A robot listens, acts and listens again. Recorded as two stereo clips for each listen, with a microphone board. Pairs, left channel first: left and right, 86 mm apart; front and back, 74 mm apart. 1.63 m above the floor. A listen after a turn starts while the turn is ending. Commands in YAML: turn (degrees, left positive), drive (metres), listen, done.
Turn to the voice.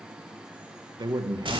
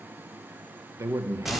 turn: -130
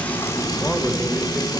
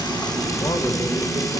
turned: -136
listen: true
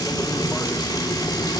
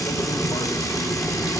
listen: true
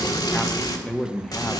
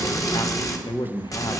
done: "Facing the man speaking, under 1 m away."